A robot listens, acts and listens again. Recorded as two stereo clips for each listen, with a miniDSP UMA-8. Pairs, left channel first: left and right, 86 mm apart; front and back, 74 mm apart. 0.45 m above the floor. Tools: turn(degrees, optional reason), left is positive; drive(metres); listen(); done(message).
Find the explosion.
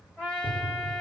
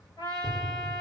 turn(degrees=85, reason="The explosion: 85° left.")
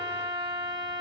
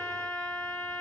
done("I heard an explosion from this way, but can't make it out now.")